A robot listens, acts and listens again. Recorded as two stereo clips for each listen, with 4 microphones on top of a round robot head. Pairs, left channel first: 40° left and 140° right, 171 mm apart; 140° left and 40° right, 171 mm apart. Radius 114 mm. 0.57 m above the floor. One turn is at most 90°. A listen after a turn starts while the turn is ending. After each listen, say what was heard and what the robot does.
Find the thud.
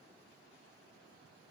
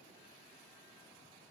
Keep listening.
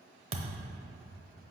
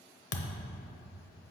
The thud: 165° left. Turn 90° left.
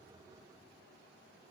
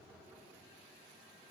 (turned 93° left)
Nothing new. It was at 70° left. Turn 70° left.
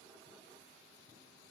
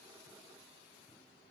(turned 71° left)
Facing where the thud came from. I can't hear it now.